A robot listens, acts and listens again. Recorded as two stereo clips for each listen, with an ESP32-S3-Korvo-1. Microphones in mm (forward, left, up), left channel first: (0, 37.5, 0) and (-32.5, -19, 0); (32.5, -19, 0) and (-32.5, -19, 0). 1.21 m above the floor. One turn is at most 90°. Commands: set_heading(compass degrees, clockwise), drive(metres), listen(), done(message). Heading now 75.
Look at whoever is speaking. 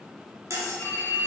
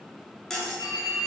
listen()
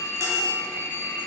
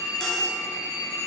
listen()
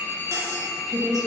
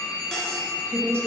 set_heading(165)
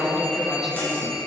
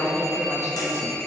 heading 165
set_heading(195)
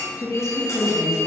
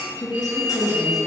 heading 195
set_heading(175)
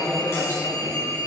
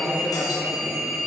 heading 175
set_heading(165)
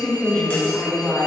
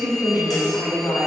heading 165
done("Facing the woman speaking.")